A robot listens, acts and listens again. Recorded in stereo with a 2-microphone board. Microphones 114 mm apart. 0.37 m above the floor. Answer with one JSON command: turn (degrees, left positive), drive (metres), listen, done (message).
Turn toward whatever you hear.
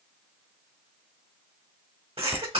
{"turn": -60}
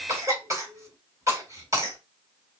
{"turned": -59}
{"turn": -35}
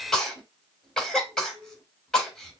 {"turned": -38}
{"done": "Facing the cough, 1 to 2 m away."}